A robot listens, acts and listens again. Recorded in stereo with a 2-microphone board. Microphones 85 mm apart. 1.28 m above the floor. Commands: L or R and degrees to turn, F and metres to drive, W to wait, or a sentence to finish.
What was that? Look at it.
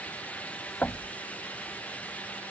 L15
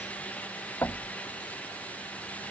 L150
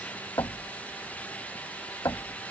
L45
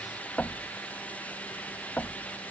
L15
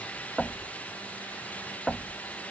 Facing the knocking.